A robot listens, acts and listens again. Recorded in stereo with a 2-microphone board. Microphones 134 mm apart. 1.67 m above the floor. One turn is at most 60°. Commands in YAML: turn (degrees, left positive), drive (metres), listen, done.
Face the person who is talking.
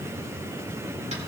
listen: true
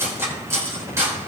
listen: true
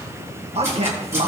turn: -45
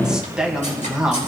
done: "Found it: a man speaking, straight ahead."